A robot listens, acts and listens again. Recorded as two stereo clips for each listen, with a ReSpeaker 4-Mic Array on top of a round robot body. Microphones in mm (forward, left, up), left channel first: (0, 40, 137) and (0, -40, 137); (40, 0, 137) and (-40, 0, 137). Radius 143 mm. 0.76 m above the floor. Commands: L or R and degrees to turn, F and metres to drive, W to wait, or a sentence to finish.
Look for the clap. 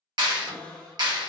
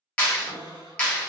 R70
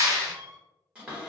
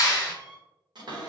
R40
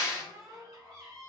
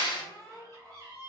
R10
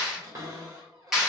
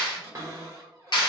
Found it: a clap, straight ahead, 1 to 2 m away.